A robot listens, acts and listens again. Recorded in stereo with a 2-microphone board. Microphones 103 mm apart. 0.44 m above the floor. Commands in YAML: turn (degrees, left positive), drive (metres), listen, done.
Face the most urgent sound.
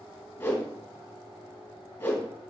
listen: true
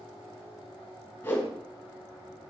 listen: true
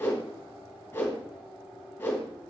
done: "I can't make out anything urgent to turn to."